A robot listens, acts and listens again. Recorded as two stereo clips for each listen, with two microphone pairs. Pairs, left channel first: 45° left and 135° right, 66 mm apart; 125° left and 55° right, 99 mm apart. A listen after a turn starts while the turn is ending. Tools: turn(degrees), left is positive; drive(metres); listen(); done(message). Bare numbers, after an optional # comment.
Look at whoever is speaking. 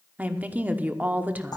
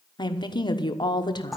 # The woman speaking: 165° left.
turn(165)
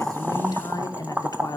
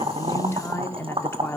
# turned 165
# The woman speaking is now 60° left.
turn(60)
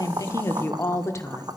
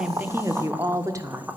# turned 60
done("Facing the woman speaking.")